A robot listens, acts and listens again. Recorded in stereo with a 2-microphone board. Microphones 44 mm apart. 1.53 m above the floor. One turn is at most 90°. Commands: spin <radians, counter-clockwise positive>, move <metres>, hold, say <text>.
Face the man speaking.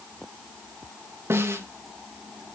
hold
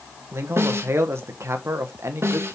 spin -1.57
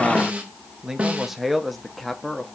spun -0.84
say Found it: a man speaking, straight ahead, 1 to 2 m away.